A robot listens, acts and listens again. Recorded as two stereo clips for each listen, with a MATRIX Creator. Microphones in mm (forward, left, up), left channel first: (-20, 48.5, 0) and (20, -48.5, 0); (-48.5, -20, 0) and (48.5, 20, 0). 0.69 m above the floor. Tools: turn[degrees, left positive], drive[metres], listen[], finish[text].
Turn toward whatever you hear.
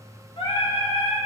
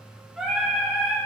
Thought: The singing: 100° left.
Action: turn[100]
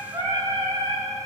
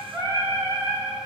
Thought: The singing is now 35° right.
Action: turn[-35]
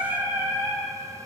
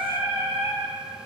Thought: The singing is now 15° right.
Action: turn[-15]
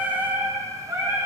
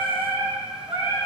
Thought: The singing is now 15° right.
Action: turn[-15]
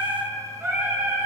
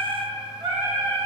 Action: finish[Facing the singing.]